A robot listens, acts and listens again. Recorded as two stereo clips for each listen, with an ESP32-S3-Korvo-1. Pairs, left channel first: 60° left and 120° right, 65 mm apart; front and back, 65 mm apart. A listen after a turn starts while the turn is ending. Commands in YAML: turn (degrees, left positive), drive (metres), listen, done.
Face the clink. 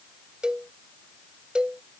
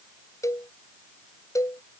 listen: true
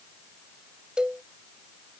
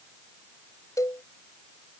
listen: true
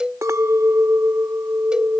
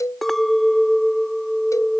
turn: -85
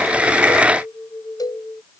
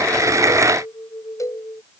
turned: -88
done: "Found it: a clink, straight ahead."